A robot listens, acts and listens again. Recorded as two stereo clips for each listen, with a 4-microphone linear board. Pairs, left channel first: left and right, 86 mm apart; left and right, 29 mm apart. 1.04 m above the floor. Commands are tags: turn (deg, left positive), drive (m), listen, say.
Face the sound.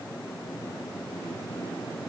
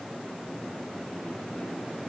<listen/>
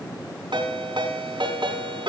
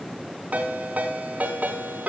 <turn deg="-65"/>
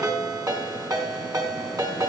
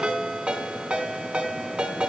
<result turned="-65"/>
<turn deg="-50"/>
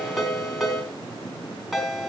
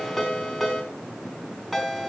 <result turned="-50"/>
<say>Facing the ringtone.</say>